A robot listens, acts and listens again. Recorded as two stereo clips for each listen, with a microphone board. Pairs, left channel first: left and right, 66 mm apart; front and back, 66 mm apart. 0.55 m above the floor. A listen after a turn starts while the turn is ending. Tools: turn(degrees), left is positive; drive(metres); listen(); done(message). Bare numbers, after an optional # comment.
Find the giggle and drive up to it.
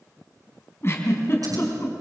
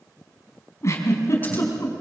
# The giggle: 45° left.
turn(45)
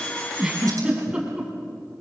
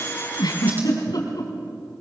# The giggle is now 10° right.
turn(-10)
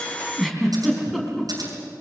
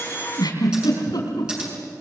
drive(1.0)
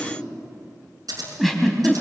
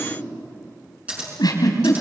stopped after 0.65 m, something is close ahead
done("Something is in my way. I am facing the giggle but have not reached it.")